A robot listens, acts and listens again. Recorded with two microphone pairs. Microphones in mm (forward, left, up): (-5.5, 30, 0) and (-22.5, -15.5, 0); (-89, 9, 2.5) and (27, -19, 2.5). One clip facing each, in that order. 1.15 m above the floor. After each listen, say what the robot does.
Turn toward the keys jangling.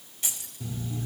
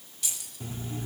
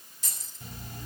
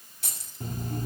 Found it: keys jangling, straight ahead, over 4 m away.